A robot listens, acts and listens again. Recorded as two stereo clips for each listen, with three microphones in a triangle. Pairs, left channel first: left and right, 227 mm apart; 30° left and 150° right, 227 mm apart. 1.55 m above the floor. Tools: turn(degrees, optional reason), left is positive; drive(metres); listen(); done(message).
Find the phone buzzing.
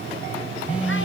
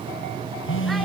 done("Facing the phone buzzing, under 1 m away.")